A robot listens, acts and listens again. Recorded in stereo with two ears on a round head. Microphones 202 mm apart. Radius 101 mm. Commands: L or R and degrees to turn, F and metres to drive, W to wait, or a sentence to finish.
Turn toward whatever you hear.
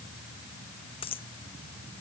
L25
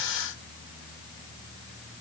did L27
W
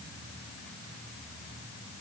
I heard a dropped coin, but can't make it out now. It was about 5° right or 130° left.